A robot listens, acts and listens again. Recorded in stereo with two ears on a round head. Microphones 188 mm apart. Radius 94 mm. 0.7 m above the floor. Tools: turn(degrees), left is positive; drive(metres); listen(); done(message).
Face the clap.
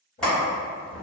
turn(degrees=30)
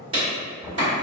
turn(degrees=-30)
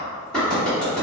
done("Facing the clap.")